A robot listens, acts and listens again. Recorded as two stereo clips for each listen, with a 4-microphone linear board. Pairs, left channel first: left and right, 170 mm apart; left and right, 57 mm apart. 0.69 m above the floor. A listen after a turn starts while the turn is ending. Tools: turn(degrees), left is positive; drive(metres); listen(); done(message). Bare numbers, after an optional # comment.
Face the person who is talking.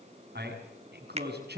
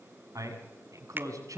turn(-90)
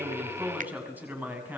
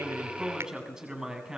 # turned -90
# So it is at 10° right.
turn(-10)
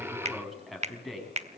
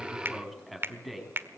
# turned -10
done("Facing the man speaking, over 4 m away.")